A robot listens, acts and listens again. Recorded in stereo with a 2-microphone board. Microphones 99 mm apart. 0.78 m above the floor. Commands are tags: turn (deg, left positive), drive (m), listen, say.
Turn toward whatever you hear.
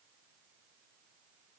<listen/>
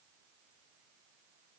<listen/>
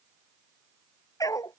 <turn deg="35"/>
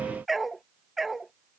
<say>Facing the dog barking.</say>